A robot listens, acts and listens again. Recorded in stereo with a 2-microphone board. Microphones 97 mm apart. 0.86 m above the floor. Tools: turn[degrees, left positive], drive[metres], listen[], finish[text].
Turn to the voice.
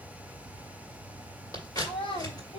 Thought: The child speaking: about 65° left or 115° left.
Action: turn[65]
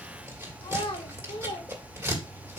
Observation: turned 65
Thought: So it is at 70° left.
Action: turn[70]
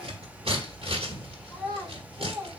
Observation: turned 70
Thought: The child speaking is now 30° left.
Action: turn[30]
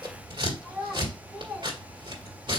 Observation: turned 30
Action: finish[Found it: a child speaking, straight ahead.]